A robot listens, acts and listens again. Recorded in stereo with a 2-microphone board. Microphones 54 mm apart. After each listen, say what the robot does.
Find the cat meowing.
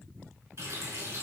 Keep listening.
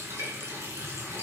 Keep listening.
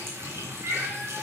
Turn 55° right.
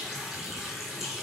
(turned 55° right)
Keep listening.
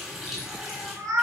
Turn 85° right.
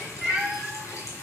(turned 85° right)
Facing the cat meowing, 2 to 4 m away.